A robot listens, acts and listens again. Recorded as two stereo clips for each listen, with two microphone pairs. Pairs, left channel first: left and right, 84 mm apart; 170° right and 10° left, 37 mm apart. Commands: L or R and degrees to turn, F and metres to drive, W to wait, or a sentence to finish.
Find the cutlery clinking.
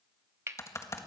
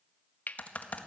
R145
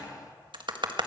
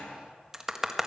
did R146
W
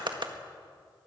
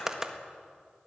W
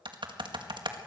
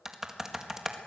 Facing where the cutlery clinking came from. I can't hear it now.